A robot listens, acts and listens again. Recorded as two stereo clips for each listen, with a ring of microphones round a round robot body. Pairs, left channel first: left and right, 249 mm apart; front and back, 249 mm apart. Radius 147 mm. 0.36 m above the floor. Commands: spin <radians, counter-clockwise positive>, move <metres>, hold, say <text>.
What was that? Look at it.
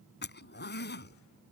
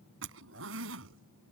spin 2.36
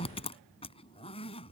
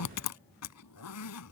spin 0.35
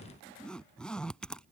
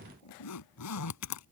say Facing the zipper.